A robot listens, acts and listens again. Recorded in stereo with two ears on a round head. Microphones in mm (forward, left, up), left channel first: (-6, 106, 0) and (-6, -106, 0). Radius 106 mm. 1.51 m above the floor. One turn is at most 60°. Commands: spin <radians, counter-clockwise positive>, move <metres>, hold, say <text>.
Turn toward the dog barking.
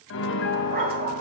spin -0.61
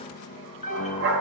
spin -1.05
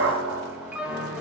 spin -1.05
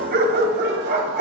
spin -0.87
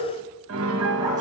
hold
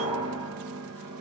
hold
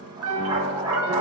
spin -0.35
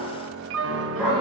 say Facing the dog barking, 2 to 4 m away.